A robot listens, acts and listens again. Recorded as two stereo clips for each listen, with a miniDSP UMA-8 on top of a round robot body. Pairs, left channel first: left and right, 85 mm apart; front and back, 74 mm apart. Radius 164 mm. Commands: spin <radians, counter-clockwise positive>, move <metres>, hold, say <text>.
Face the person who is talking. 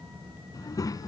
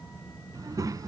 spin 2.44
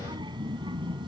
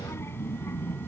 spin -1.05
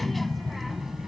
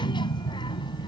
say Facing the child speaking.